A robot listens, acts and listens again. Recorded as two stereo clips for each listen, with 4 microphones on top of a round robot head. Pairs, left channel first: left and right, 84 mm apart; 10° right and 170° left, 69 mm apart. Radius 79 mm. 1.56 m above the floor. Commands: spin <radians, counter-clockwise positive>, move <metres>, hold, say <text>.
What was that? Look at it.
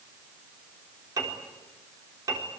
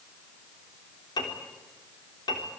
spin -0.70
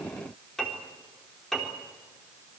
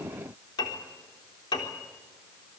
say Found it: a piano, straight ahead, 2 to 4 m away.